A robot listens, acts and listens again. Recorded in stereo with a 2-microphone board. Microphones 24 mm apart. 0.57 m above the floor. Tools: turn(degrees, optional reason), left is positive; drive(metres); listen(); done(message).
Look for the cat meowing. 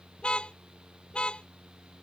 listen()
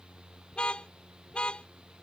listen()
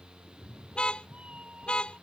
turn(degrees=-55, reason="The cat meowing: about 55° right or 125° right.")
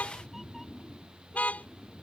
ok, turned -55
done("Found it: a cat meowing, straight ahead.")